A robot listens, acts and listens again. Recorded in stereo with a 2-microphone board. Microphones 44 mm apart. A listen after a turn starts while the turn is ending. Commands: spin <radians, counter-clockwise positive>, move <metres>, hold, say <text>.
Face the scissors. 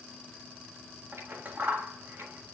spin -0.87
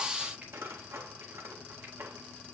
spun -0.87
spin -1.48
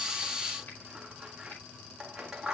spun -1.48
spin -0.17
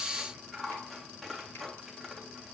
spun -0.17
say Found it: scissors, straight ahead.